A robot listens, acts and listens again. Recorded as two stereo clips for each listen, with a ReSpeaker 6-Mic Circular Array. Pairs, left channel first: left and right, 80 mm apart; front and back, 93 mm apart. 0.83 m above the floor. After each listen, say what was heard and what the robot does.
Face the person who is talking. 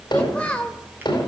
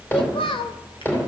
The child speaking: 15° left. Turn 15° left.
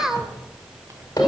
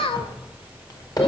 Found it: a child speaking, straight ahead.